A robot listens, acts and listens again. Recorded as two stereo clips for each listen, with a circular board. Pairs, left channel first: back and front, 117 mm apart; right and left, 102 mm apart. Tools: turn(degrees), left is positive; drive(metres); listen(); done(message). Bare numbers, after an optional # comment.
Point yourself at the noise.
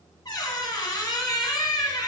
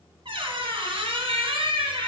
# The squeak: 120° left.
turn(120)
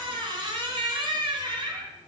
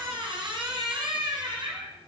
# The squeak is now 45° left.
turn(45)
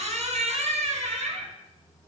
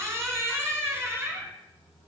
# The squeak is now 20° left.
turn(20)
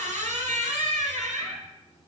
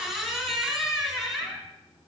done("Found it: a squeak, straight ahead, 1 to 2 m away.")